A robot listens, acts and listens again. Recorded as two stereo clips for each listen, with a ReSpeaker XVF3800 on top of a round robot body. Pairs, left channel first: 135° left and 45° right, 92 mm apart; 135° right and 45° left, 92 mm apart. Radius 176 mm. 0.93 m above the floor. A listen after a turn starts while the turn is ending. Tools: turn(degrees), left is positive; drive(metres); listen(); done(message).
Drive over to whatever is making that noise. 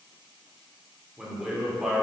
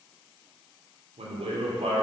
turn(degrees=40)
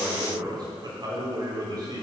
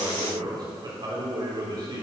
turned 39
drive(metres=1.0)
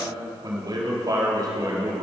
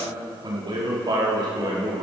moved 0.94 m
drive(metres=1.0)
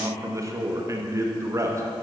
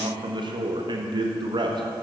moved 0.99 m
turn(degrees=10)
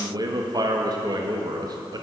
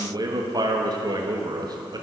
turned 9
drive(metres=1.0)
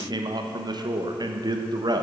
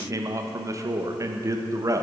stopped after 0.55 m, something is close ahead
done("Arrived at the man speaking, straight ahead.")